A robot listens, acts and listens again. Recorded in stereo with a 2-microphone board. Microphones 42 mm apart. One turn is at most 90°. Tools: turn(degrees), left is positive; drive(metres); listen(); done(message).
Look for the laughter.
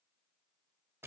listen()
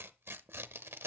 listen()
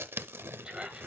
turn(degrees=-20)
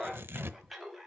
done("Found it: laughter, straight ahead.")